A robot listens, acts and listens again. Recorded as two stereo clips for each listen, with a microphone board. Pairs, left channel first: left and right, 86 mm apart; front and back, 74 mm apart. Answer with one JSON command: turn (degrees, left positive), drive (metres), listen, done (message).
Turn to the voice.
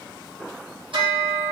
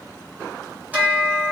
{"listen": true}
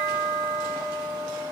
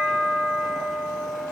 {"listen": true}
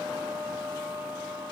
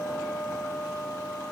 {"done": "I can't make out anyone speaking to turn to."}